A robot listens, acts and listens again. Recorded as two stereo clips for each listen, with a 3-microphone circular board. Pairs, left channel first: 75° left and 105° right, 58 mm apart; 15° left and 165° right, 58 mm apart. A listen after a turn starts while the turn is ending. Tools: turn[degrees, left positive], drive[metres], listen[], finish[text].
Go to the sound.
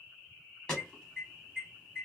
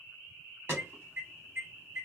Thought: The alarm: 150° left.
Action: turn[150]
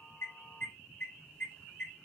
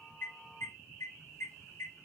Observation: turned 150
Thought: The alarm is now 15° left.
Action: turn[15]
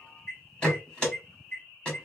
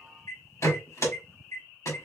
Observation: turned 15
Action: drive[1.0]
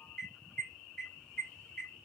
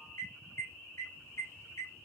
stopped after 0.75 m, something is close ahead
Action: finish[I am next to the alarm.]